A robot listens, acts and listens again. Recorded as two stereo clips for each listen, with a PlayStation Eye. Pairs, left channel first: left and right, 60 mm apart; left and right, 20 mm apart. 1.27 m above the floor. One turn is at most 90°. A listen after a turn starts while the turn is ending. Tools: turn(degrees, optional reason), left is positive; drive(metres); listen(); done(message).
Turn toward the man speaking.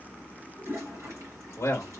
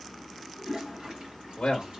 turn(degrees=50, reason="The man speaking: about 50° left or 130° left.")
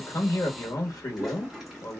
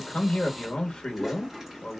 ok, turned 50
turn(degrees=80, reason="So it is at 80° left.")
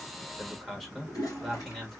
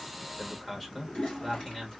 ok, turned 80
done("Facing the man speaking.")